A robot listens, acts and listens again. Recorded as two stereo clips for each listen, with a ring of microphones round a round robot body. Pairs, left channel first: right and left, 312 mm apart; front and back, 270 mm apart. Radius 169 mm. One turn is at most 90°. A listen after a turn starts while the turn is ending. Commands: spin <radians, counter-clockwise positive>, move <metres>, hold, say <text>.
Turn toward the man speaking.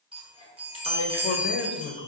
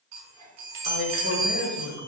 spin -0.52
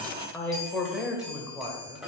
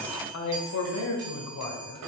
spin 0.17
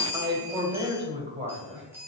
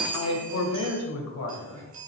spin 0.44
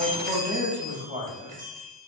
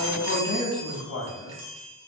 spin 0.26
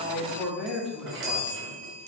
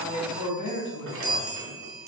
say Facing the man speaking, 2 to 4 m away.